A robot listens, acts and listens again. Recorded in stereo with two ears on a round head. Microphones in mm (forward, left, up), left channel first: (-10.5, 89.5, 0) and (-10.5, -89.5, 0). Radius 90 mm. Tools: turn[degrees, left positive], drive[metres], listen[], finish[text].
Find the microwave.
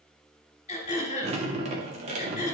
Action: listen[]
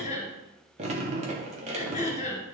Action: listen[]
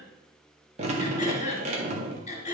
Action: finish[I can't make out a microwave to turn to.]